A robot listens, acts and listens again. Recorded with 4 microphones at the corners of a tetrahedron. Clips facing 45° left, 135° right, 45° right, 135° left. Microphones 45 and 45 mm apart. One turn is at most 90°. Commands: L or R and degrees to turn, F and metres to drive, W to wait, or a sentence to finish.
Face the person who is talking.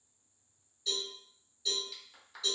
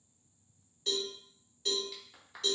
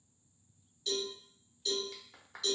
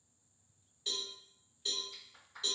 W
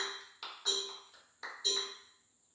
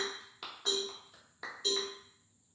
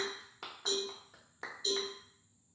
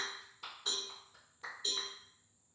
W
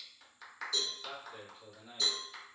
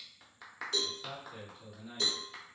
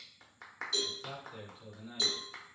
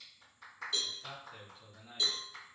L90
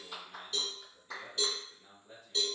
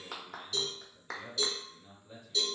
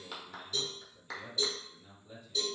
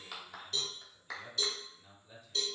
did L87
L45
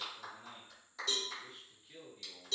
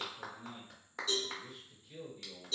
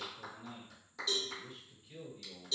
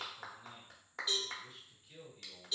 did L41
Facing the man speaking, 1 to 2 m away.